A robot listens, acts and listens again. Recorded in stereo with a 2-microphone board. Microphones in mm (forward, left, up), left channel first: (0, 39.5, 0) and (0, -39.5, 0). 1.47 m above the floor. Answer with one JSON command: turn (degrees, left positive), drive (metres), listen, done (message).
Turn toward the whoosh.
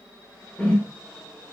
{"turn": 20}
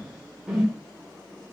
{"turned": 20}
{"done": "Facing the whoosh, 1 to 2 m away."}